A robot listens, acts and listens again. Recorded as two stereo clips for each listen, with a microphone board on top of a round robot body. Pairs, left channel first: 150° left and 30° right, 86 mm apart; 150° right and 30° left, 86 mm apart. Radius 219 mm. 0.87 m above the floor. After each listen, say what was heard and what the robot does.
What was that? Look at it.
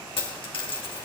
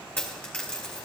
The dropped coin: 135° left. Turn 135° left.
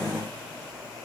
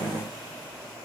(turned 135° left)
Facing where the dropped coin came from. I can't hear it now.